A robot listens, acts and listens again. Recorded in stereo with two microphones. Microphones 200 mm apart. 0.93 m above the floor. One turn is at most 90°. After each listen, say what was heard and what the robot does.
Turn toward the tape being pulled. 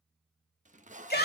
The tape being pulled: about 35° right or 145° right. Turn 35° right.
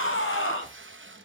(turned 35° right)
So it is at 105° right. Turn 90° right.
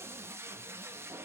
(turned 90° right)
The tape being pulled is now 10° right. Turn 10° right.
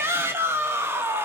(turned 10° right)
Keep listening.
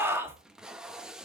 Found it: tape being pulled, straight ahead, under 1 m away.